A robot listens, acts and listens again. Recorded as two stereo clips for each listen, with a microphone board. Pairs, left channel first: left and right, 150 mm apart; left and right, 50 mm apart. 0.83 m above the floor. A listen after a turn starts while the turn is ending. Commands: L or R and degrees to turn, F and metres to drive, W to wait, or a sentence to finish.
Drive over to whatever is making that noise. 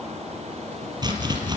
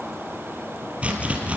R30
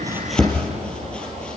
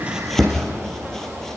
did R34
F1.0
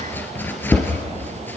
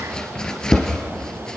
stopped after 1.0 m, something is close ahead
L15
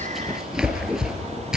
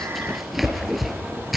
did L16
Blocked. The chopping is further on, straight ahead.